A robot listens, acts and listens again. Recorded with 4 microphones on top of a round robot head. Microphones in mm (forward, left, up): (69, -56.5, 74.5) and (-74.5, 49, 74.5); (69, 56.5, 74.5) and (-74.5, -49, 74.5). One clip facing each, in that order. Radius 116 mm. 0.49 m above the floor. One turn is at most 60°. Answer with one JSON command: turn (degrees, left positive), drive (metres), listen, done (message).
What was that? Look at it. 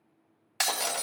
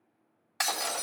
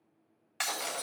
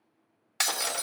{"turn": -60}
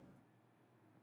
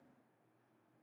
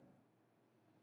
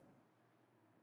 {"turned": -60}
{"turn": -40}
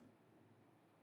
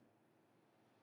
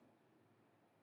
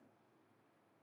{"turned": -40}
{"done": "Facing where the breaking glass came from. I can't hear it now."}